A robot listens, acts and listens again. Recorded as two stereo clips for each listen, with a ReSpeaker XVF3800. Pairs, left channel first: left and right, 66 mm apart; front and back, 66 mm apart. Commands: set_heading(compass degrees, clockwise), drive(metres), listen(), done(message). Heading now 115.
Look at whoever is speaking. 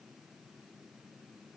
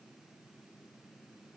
listen()
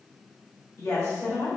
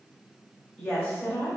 set_heading(30)
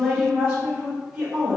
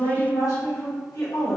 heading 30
done("Found it: a woman speaking, straight ahead.")